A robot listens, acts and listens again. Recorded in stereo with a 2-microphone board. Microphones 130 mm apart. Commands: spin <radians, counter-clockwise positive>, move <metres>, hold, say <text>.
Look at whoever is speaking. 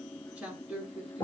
spin -0.52
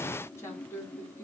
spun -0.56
spin 0.35
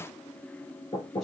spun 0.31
hold
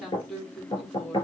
say Facing the woman speaking.